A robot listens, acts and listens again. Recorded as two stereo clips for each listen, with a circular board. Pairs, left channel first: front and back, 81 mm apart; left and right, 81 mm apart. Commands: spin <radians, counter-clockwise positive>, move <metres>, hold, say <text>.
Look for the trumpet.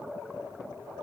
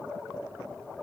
hold
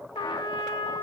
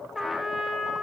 say Facing the trumpet.